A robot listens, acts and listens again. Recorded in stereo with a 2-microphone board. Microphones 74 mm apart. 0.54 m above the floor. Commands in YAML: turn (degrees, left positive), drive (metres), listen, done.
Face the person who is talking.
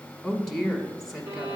turn: -30
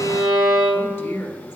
turn: 25
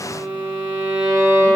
listen: true
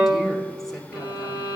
listen: true
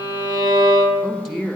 done: "Found it: a woman speaking, straight ahead, 1 to 2 m away."